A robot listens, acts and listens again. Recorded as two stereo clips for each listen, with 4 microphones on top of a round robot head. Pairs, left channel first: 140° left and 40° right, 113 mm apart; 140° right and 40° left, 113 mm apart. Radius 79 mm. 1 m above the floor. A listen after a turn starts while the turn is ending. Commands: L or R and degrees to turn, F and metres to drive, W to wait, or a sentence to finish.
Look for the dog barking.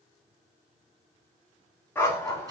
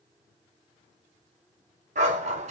L70
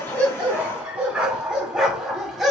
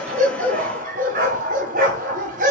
L45
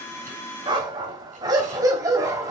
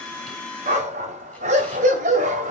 L20
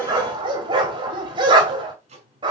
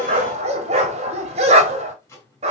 L10
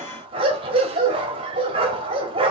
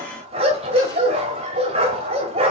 Found it: a dog barking, straight ahead.